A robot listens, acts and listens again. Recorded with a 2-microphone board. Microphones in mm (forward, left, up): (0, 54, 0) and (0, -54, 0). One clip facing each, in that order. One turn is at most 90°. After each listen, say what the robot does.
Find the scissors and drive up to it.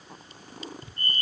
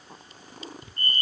Turn 20° right.
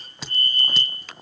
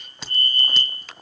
Drive 1.0 m forward.
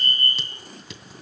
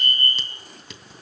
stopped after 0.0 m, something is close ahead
Blocked. The scissors is further on, straight ahead.